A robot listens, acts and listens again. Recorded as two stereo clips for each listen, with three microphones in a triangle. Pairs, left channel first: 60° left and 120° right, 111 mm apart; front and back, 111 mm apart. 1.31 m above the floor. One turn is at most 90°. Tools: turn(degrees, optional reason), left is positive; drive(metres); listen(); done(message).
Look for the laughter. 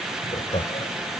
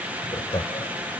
turn(degrees=45, reason="The laughter: 45° left.")
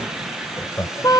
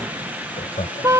done("Facing the laughter.")